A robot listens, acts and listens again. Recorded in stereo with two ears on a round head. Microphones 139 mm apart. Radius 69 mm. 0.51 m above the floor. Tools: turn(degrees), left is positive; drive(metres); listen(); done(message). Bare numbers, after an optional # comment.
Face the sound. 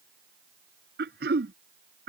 # The throat clearing: about 70° right or 110° right.
turn(-70)
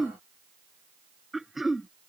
done("Facing the throat clearing.")